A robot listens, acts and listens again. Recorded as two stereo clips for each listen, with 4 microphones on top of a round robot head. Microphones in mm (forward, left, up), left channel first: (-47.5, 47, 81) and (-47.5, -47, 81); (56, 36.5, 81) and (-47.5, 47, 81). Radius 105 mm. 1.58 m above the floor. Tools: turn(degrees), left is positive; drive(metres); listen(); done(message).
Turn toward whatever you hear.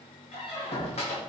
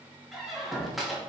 turn(degrees=85)
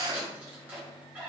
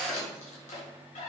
turn(degrees=-10)
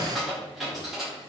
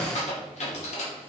done("Facing the squeak, 2 to 4 m away.")